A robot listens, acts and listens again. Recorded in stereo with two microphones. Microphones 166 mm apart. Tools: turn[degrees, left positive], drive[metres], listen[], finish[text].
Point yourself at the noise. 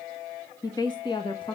Thought: The woman speaking: about 35° left or 145° left.
Action: turn[35]
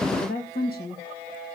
Thought: So it is at 110° left.
Action: turn[110]
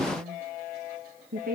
Thought: The woman speaking is now 60° right.
Action: turn[-60]
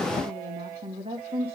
Thought: The woman speaking is now 35° right.
Action: turn[-35]
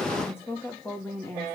Thought: The woman speaking is now 15° left.
Action: turn[15]
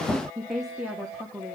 Action: finish[Facing the woman speaking, 1 to 2 m away.]